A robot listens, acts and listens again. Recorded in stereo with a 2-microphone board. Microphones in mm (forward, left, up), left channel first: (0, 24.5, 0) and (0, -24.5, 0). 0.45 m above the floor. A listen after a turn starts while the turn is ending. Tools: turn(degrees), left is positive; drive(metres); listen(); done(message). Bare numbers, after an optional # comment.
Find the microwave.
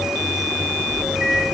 # The microwave: about 45° right or 135° right.
turn(-45)
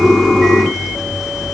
listen()
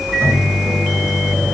# So it is at 80° right.
turn(-80)
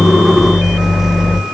done("Facing the microwave.")